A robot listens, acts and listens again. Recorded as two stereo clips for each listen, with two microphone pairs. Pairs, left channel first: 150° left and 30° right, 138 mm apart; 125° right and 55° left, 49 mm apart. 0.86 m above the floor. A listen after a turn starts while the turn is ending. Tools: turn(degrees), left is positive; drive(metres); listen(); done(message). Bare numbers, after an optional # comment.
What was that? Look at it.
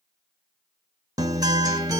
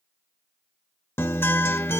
# The guitar: 90° right.
turn(-90)
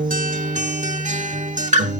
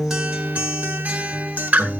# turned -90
done("Facing the guitar, 1 to 2 m away.")